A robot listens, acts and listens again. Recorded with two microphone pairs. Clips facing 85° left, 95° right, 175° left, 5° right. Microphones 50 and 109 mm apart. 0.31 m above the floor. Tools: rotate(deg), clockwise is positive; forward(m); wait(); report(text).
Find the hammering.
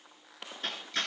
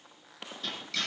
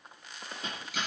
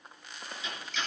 rotate(-135)
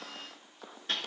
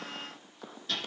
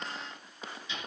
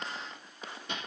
rotate(-35)
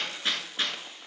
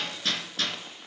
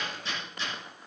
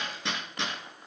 rotate(-15)
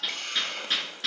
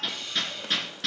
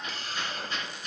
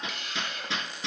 report("Facing the hammering.")